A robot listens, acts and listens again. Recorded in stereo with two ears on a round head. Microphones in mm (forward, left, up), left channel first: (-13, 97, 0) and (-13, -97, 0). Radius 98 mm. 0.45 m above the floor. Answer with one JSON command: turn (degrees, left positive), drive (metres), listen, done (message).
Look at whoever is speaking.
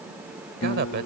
{"turn": -45}
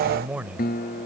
{"done": "Facing the man speaking."}